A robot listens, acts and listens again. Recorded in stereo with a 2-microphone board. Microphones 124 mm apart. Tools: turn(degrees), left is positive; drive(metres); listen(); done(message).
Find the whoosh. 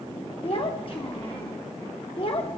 listen()
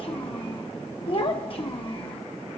listen()
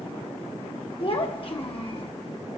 done("I can't make out a whoosh to turn to.")